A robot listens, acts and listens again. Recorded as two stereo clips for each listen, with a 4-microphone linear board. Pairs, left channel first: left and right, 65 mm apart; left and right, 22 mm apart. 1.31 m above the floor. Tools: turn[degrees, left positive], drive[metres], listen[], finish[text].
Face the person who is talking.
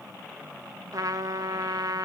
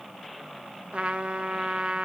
Action: listen[]
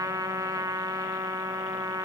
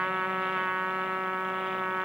Action: listen[]
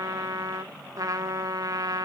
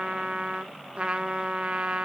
Action: finish[I can't make out anyone speaking, only a trumpet.]